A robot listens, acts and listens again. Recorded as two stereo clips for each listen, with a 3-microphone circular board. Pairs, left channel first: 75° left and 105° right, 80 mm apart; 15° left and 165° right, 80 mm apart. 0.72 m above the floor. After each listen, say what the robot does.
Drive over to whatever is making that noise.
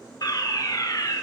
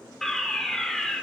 Turn 100° left.
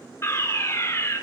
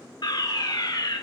Turn 25° left.
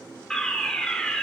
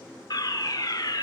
Drive 1.0 m forward.
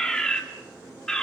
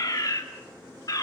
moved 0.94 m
Drive 1.0 m forward.
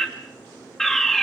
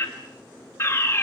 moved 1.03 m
Drive 1.0 m forward.
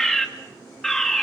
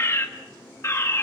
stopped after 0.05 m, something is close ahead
Arrived at the fire alarm, straight ahead.